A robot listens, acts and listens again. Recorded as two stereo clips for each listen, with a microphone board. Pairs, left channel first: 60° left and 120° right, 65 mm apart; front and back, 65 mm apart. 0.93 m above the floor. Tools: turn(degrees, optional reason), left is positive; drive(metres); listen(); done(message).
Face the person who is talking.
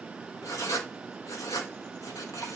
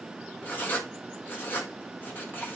listen()
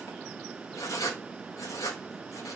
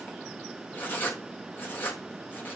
listen()
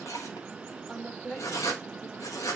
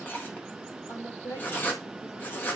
turn(degrees=-20, reason="The woman speaking: 20° right.")
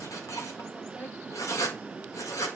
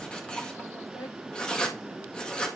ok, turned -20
listen()
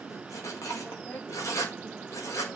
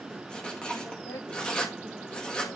done("Found it: a woman speaking, straight ahead.")